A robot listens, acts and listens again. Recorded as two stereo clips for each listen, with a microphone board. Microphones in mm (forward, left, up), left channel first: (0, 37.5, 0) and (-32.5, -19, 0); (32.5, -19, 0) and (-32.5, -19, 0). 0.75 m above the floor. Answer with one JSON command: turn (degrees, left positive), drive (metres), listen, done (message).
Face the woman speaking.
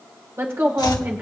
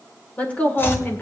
{"turn": -60}
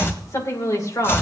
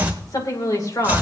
{"turn": 30}
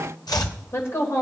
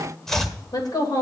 {"turn": 15}
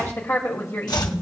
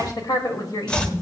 {"turn": 10}
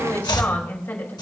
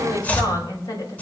{"done": "Facing the woman speaking."}